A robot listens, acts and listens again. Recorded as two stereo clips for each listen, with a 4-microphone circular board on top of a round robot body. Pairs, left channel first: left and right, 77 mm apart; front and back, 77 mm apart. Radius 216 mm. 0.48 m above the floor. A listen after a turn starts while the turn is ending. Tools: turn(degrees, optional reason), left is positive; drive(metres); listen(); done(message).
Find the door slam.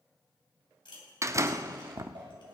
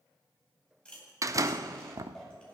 turn(degrees=-135, reason="The door slam: 135° right.")
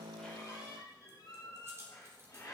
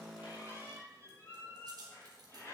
done("Facing where the door slam came from. I can't hear it now.")